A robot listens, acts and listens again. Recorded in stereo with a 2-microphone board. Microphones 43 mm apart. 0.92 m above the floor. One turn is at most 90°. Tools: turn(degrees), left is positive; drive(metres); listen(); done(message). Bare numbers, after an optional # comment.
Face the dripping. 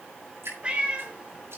# The dripping: about 70° right or 110° right.
turn(-70)
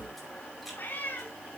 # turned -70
listen()
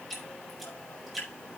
done("Found it: dripping, straight ahead, over 4 m away.")